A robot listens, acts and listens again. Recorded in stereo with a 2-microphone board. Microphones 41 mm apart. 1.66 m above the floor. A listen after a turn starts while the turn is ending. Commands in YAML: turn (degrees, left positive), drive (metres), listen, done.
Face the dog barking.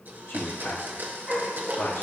turn: -20
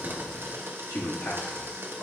listen: true
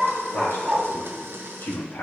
turn: -20
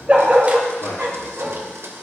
turn: -35
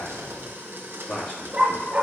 turn: -35
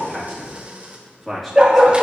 turn: -25
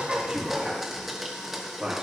listen: true
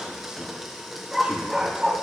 turn: -10
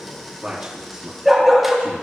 done: "Found it: a dog barking, straight ahead."